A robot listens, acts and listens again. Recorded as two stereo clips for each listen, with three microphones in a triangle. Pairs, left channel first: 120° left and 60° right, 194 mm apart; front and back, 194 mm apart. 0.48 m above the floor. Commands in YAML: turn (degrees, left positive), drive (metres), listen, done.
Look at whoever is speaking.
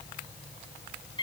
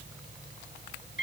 listen: true
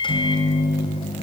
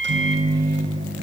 listen: true
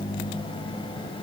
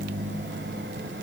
done: "I can't make out anyone speaking, only a microwave."